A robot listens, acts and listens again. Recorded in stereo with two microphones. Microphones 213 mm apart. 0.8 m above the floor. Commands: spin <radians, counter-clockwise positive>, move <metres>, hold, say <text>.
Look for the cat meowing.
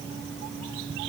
hold
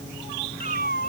spin 0.70
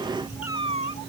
spin 1.83
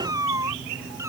spin -0.26
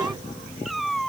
say Facing the cat meowing.